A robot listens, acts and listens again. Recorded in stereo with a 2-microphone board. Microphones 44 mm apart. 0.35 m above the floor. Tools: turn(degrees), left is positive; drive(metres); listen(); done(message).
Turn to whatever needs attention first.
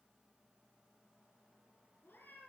listen()
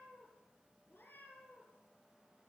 listen()
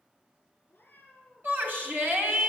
turn(degrees=-50)
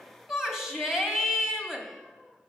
turn(degrees=-10)
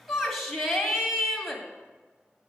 done("Found it: a shout, straight ahead.")